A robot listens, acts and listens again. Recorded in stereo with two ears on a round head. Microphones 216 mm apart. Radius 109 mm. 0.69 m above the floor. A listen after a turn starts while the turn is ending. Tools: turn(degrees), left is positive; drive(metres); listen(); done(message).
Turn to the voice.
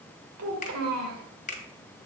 turn(degrees=-70)
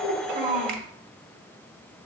turn(degrees=-35)
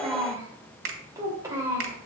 turn(degrees=-15)
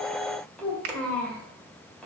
done("Found it: a child speaking, straight ahead, 2 to 4 m away.")